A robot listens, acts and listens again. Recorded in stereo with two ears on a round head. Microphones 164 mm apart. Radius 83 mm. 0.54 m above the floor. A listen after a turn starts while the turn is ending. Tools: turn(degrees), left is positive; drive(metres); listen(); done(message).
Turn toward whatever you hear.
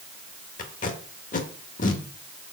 turn(degrees=45)
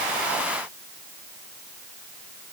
listen()
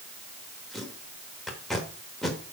done("Facing the tape being pulled.")